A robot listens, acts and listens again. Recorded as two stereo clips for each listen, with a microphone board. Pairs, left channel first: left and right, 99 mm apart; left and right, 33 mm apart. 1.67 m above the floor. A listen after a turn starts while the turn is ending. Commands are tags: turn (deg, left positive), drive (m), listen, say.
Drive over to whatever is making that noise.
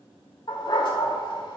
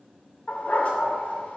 <turn deg="50"/>
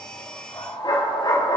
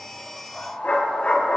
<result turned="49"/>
<turn deg="70"/>
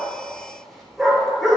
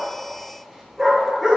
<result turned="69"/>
<drive m="1.0"/>
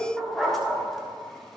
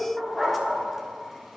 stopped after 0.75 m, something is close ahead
<say>I am next to the dog barking.</say>